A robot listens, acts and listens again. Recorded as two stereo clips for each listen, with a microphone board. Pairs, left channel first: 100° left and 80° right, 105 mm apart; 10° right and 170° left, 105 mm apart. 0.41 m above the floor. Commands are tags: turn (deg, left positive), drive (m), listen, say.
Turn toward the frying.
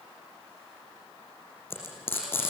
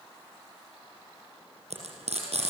<turn deg="170"/>
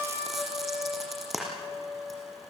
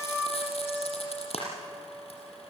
<turn deg="10"/>
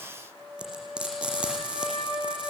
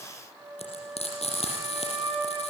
<say>Found it: frying, straight ahead, over 4 m away.</say>